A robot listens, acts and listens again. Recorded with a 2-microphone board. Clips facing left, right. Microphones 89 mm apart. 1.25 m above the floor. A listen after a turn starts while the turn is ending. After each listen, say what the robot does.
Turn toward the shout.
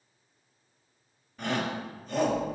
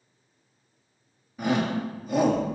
Turn 30° right.
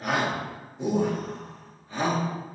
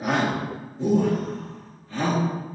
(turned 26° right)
Turn 20° left.
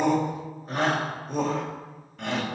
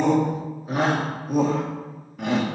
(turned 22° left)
Found it: a shout, straight ahead.